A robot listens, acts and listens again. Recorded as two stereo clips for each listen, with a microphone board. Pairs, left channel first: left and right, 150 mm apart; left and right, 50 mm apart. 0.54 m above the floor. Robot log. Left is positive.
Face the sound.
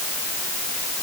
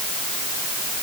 cmd idle
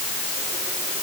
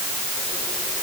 cmd idle
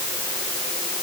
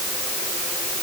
end: I can't make out anything to turn to.